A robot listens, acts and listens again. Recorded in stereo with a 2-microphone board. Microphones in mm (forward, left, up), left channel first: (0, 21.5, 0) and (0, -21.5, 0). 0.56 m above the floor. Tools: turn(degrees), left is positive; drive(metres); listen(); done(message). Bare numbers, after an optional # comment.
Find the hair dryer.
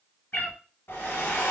# The hair dryer: about 75° left or 105° left.
turn(75)
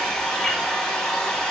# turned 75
# So it is at 10° left.
turn(10)
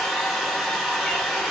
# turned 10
done("Facing the hair dryer, 1 to 2 m away.")